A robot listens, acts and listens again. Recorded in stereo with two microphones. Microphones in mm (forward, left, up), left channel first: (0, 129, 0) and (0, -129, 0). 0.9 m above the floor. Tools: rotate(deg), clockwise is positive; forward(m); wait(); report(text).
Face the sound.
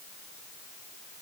wait()
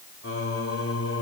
rotate(-65)
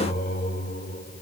rotate(-35)
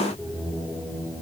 rotate(10)
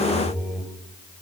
report("Found it: singing, straight ahead, over 4 m away.")